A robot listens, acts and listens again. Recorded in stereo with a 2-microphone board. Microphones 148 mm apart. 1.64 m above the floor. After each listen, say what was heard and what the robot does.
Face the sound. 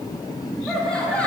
Turn 30° left.
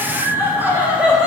Facing the laughter.